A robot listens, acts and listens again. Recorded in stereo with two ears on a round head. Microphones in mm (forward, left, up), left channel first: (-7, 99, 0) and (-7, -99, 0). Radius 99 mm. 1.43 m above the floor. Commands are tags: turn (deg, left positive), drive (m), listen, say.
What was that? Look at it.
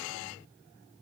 <listen/>
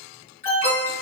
<turn deg="30"/>
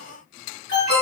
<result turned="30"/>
<turn deg="120"/>
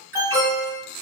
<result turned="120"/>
<turn deg="-15"/>
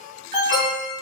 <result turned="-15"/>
<say>Found it: an alarm, straight ahead.</say>